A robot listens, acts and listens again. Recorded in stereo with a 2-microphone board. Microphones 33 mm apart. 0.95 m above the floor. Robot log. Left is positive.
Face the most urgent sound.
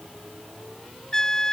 cmd idle
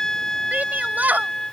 cmd yaw -90
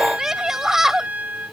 note: So it is at 15° right.
cmd yaw -15
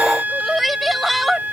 end: Found it: a shout, straight ahead.